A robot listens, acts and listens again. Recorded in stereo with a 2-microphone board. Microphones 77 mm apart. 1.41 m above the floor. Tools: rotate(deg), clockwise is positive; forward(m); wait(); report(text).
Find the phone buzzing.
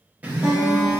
rotate(20)
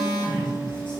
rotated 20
rotate(135)
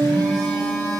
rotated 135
rotate(-10)
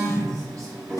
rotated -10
report("Facing the phone buzzing, under 1 m away.")